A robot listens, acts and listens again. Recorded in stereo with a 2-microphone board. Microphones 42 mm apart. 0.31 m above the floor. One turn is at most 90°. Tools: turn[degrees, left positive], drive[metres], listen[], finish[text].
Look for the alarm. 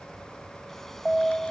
Action: turn[30]
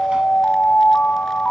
Thought: So it is at 135° left.
Action: turn[90]
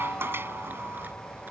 Thought: The alarm is now 80° left.
Action: turn[80]
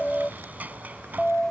Thought: The alarm is now 25° left.
Action: turn[25]
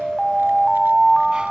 Action: finish[Found it: an alarm, straight ahead.]